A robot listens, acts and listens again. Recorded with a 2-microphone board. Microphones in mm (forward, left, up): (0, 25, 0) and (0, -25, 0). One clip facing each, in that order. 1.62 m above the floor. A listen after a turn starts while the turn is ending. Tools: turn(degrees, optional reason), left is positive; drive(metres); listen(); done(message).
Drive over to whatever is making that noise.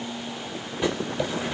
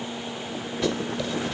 turn(degrees=20, reason="The writing: about 20° left or 160° left.")
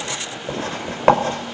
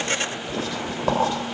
turn(degrees=140, reason="So it is at 140° left.")
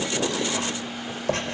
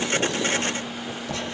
turn(degrees=50, reason="The writing is now 50° left.")
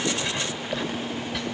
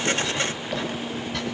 drive(metres=1.0)
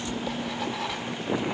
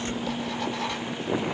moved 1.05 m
drive(metres=1.0)
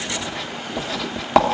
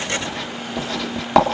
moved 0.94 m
drive(metres=1.0)
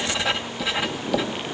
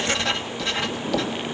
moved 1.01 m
turn(degrees=10, reason="The writing is now 10° left.")
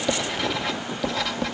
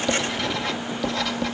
drive(metres=1.0)
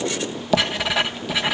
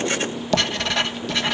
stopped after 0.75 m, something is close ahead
turn(degrees=10, reason="The writing is now 10° left.")
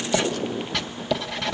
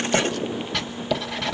done("I am next to the writing.")